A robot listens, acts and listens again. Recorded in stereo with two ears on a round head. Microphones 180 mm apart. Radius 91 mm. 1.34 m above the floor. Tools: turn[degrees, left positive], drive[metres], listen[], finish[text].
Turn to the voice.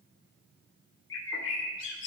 Action: listen[]
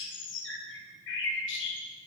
Action: listen[]
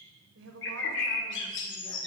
Thought: The woman speaking: about 65° right or 115° right.
Action: turn[-65]
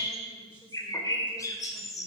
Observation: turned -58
Thought: So it is at 10° right.
Action: turn[-10]
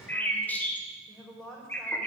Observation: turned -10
Action: finish[Found it: a woman speaking, straight ahead.]